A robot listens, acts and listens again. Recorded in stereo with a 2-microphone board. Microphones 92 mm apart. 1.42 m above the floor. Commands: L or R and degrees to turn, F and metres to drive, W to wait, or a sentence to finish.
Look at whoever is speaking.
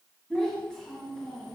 L30
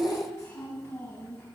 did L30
L140
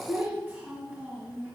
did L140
R20
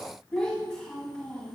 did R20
Found it: a child speaking, straight ahead.